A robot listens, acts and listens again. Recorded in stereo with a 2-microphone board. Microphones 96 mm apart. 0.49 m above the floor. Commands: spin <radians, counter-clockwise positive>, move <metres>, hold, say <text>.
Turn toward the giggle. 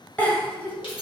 spin 0.52
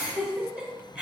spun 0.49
spin -0.17
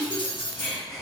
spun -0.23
say Found it: a giggle, straight ahead, 1 to 2 m away.